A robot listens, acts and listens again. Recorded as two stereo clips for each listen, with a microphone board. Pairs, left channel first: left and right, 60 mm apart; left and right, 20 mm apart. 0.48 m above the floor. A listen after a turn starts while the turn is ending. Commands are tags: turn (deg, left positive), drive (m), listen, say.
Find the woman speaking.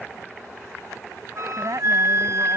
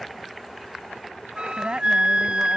<turn deg="-60"/>
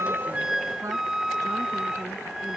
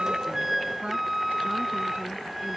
<turn deg="-60"/>
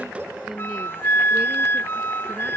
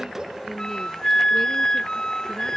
<turn deg="-15"/>
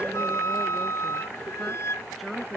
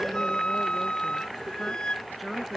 <say>Facing the woman speaking.</say>